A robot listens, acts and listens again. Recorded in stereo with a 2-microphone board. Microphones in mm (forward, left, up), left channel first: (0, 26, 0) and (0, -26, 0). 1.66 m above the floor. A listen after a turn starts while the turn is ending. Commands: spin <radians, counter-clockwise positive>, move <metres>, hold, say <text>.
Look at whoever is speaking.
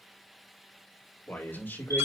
spin 0.79
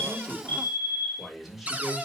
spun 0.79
say Found it: a man speaking, straight ahead, over 4 m away.